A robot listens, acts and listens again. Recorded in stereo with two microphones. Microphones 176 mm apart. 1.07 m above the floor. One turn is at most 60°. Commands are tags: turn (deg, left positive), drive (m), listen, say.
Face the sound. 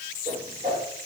<turn deg="-45"/>
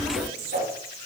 <turn deg="-60"/>
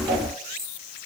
<turn deg="-30"/>
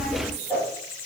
<turn deg="10"/>
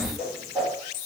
<say>Facing the whoosh.</say>